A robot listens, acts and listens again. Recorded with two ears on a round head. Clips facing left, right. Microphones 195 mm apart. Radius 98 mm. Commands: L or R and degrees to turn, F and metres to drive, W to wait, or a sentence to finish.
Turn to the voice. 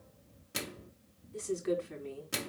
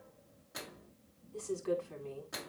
L25
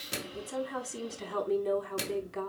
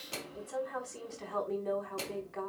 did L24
L135
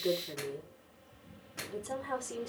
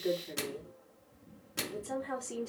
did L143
Found it: a woman speaking, straight ahead, over 4 m away.